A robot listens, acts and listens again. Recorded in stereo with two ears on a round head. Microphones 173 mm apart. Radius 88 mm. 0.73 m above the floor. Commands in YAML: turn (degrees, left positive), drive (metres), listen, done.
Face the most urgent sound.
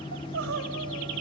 turn: -90
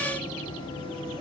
listen: true
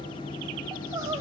turn: -15
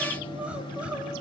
done: "Found it: crying, straight ahead, 2 to 4 m away."